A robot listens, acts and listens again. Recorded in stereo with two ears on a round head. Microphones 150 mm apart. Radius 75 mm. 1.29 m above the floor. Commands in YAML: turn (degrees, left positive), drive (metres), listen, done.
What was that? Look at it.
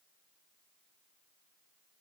listen: true
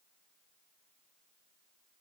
listen: true
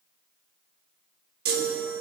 turn: -65
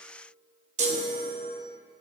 turn: -45
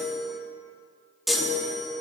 done: "Found it: a chime, straight ahead."